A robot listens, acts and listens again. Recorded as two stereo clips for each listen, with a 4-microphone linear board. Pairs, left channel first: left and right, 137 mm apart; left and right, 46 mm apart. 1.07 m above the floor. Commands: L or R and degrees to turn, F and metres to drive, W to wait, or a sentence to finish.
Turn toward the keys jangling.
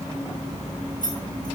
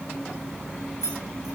L75
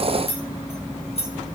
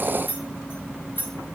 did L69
L50
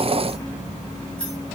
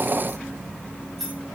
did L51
Facing the keys jangling.